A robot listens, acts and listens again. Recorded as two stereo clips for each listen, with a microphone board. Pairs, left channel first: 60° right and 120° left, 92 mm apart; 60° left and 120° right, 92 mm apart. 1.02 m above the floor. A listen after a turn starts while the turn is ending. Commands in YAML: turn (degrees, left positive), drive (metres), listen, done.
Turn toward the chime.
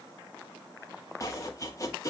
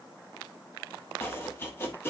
listen: true
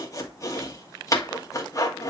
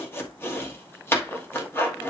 listen: true
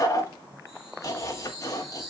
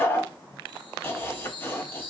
turn: 35
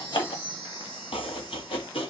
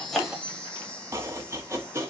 turn: -20
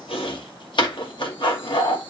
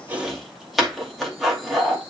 listen: true
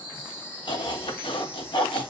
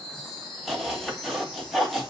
done: "Found it: a chime, straight ahead, over 4 m away."